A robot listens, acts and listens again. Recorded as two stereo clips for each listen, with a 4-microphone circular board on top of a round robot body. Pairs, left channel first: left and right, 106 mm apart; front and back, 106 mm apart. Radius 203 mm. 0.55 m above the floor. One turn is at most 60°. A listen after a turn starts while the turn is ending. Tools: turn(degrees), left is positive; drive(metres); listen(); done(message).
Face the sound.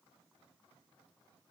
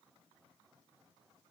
listen()
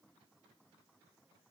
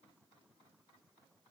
listen()
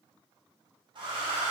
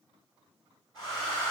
turn(degrees=-50)
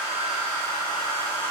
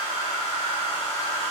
turn(degrees=15)
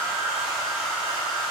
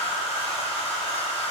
done("Found it: a hair dryer, straight ahead.")